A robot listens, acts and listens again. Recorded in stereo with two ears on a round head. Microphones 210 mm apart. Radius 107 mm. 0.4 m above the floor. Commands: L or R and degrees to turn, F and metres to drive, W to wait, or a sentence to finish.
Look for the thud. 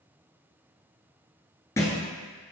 L30
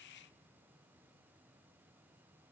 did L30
W
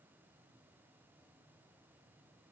I heard a thud, but can't make it out now. It was about 20° right or 140° left.